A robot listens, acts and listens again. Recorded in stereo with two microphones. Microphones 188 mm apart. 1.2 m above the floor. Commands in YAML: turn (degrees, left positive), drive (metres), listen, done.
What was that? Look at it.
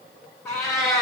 turn: 20
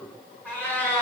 turn: 30
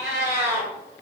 turn: -15
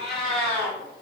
done: "Found it: a cat meowing, straight ahead, 2 to 4 m away."